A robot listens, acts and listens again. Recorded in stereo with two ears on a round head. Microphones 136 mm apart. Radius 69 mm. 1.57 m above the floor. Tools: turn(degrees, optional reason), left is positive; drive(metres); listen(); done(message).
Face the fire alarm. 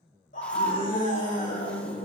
listen()
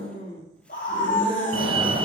turn(degrees=-35, reason="The fire alarm: about 35° right or 145° right.")
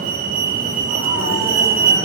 turn(degrees=-105, reason="So it is at 105° right.")
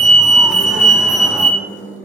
done("Found it: a fire alarm, straight ahead, under 1 m away.")